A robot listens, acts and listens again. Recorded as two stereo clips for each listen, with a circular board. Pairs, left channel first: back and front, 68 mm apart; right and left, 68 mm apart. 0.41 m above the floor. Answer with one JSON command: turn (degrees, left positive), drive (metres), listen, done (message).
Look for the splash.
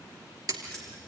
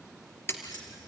{"turn": -30}
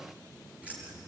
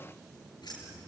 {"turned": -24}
{"turn": -10}
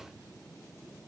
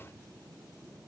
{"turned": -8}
{"done": "Facing where the splash came from. I can't hear it now."}